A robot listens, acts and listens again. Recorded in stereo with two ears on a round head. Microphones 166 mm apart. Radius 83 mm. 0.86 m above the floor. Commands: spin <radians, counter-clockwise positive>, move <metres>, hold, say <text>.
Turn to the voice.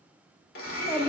spin 0.52
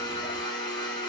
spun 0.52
hold
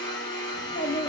spin 2.36
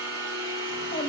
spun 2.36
spin 0.52
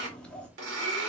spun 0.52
say Found it: a child speaking, straight ahead.